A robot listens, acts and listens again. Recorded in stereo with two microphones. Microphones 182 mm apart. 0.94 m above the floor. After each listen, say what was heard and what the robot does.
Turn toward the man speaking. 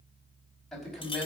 Turn 30° left.
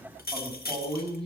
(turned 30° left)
So it is at 30° right. Turn 30° right.
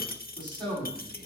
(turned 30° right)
The man speaking is now 25° right. Turn 25° right.
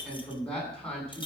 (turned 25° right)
Facing the man speaking.